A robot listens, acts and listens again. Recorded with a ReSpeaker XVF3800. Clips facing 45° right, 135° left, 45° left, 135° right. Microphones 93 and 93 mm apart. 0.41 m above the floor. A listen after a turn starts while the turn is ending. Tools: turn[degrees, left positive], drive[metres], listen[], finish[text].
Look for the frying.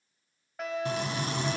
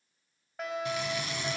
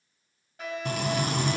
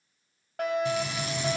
Thought: The frying: 10° left.
Action: turn[10]
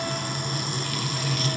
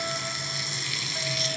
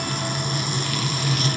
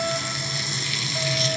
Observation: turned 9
Action: finish[Found it: frying, straight ahead, 1 to 2 m away.]